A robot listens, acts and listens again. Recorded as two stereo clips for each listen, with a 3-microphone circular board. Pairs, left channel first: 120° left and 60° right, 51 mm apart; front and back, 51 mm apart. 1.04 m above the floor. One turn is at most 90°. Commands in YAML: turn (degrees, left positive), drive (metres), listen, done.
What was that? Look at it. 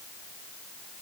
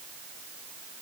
listen: true
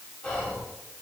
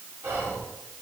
turn: -90
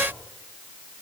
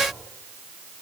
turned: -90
turn: -75
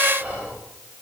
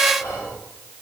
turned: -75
done: "Facing the whispering, 2 to 4 m away."